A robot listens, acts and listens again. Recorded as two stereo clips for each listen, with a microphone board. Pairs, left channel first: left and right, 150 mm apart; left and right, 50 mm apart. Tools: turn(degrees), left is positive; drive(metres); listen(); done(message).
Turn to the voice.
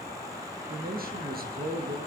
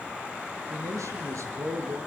turn(degrees=-70)
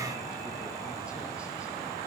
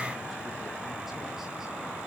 listen()
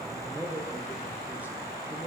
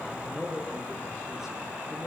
turn(degrees=-10)
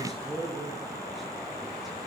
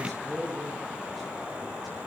done("Found it: a man speaking, straight ahead.")